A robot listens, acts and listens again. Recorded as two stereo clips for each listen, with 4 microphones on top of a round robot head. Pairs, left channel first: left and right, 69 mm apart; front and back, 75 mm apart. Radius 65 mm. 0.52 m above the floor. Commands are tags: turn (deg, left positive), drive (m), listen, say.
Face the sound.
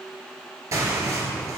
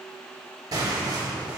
<turn deg="-130"/>
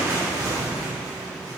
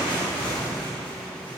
<turn deg="-35"/>
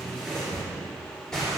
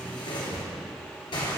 <say>Found it: tearing paper, straight ahead.</say>